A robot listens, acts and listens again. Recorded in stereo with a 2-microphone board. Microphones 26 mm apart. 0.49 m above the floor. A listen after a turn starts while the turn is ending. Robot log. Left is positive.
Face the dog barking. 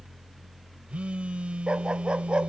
note: The dog barking: about 45° right or 135° right.
cmd yaw -45
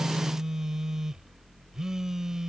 cmd idle
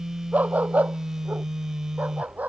note: So it is at 100° right.
cmd yaw -100
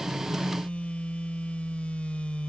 cmd idle
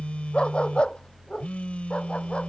note: The dog barking is now 45° left.
cmd yaw +45
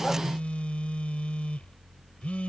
cmd idle
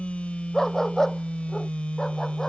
note: The dog barking is now 20° left.
cmd yaw +20
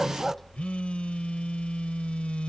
note: The dog barking is now 10° left.
cmd yaw +10
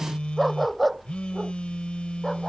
end: Found it: a dog barking, straight ahead.